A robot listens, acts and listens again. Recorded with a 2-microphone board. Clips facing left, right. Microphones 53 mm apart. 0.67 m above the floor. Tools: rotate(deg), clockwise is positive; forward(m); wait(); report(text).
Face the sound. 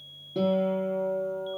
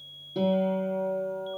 rotate(-30)
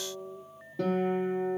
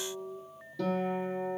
rotate(-145)
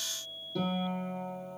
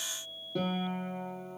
rotate(25)
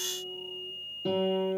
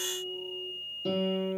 rotate(-15)
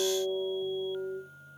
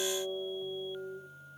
report("Facing the guitar.")